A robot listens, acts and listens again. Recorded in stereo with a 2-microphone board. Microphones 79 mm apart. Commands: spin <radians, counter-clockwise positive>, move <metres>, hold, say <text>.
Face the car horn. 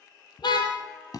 spin 1.13
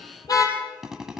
spin 0.87
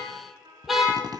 say Facing the car horn, over 4 m away.